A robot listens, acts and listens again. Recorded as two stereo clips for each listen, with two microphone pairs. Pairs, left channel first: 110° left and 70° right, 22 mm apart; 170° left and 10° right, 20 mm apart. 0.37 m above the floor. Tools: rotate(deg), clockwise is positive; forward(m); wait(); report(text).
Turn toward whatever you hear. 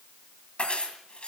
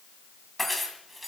rotate(-80)
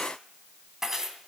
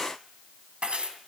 report("Facing the keys jangling, 2 to 4 m away.")